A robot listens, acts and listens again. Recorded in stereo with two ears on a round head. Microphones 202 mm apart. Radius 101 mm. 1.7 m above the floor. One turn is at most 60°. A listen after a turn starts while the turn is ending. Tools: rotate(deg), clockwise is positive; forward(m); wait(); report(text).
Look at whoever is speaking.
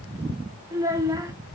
rotate(30)
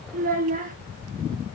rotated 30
rotate(60)
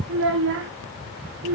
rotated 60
rotate(60)
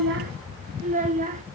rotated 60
rotate(40)
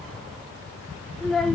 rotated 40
report("Facing the child speaking, 1 to 2 m away.")